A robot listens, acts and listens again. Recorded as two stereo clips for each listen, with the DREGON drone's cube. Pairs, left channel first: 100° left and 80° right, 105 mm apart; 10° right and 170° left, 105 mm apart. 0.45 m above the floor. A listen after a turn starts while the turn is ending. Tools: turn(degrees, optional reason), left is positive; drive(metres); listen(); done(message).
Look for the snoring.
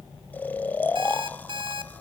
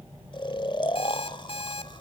turn(degrees=25, reason="The snoring: 25° left.")
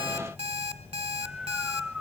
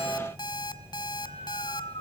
listen()
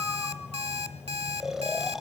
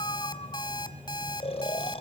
done("Found it: snoring, straight ahead, under 1 m away.")